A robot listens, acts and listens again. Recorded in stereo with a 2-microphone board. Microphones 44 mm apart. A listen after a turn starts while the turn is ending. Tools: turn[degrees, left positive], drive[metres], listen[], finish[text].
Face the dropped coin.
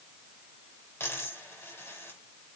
Thought: The dropped coin: about 65° left or 115° left.
Action: turn[65]
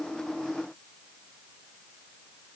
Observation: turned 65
Action: listen[]
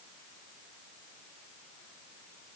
Action: finish[I heard a dropped coin, but can't make it out now. It was about straight ahead or 50° left.]